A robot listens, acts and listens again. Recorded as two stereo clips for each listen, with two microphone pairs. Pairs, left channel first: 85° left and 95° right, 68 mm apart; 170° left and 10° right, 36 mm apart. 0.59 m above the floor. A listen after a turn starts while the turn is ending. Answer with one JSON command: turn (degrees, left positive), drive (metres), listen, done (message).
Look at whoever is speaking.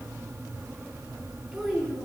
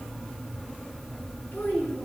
{"turn": 175}
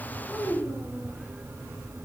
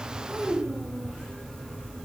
{"turn": -25}
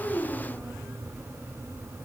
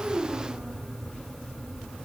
{"listen": true}
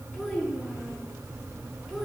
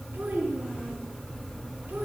{"done": "Found it: a child speaking, straight ahead, over 4 m away."}